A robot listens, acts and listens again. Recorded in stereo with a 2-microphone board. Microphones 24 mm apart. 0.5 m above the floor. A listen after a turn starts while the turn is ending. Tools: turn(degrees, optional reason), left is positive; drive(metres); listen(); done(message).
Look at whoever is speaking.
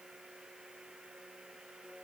listen()
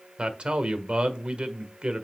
turn(degrees=-55, reason="The man speaking: about 55° right or 125° right.")
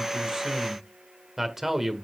turn(degrees=-20, reason="So it is at 20° right.")
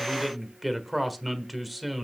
done("Found it: a man speaking, straight ahead, 1 to 2 m away.")